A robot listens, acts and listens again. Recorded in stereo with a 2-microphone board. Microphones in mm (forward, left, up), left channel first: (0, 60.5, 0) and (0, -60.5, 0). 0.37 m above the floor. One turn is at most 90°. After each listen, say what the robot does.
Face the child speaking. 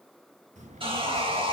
Turn 90° right.
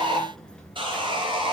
Turn 10° left.
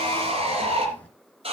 Turn 10° left.
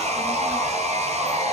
Keep listening.
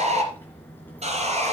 Turn 15° left.
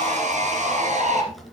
Found it: a child speaking, straight ahead.